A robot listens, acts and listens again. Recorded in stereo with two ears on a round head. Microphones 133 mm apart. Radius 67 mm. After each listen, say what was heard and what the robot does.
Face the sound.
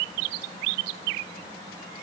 Keep listening.
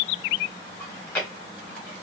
Turn 30° left.
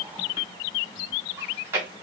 So it is at 15° right. Turn 15° right.
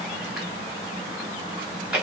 Facing the chewing, 1 to 2 m away.